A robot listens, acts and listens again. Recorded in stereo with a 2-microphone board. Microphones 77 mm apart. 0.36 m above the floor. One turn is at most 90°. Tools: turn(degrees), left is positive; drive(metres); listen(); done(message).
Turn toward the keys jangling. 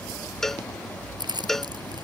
turn(degrees=-75)
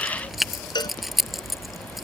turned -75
done("Facing the keys jangling.")